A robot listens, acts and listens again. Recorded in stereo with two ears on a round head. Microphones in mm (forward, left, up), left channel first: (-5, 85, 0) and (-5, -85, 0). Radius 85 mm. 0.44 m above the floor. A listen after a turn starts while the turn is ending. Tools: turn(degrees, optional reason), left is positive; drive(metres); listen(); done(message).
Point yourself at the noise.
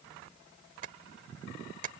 turn(degrees=-45, reason="The tapping: about 45° right or 135° right.")
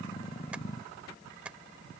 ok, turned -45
turn(degrees=-10, reason="So it is at 10° right.")
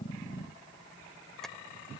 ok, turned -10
done("Facing the tapping.")